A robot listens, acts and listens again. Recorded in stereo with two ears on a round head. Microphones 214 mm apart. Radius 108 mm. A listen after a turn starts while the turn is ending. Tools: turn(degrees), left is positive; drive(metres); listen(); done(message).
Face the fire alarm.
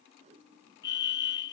turn(degrees=50)
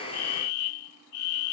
turn(degrees=80)
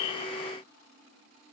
listen()
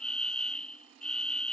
done("Found it: a fire alarm, straight ahead.")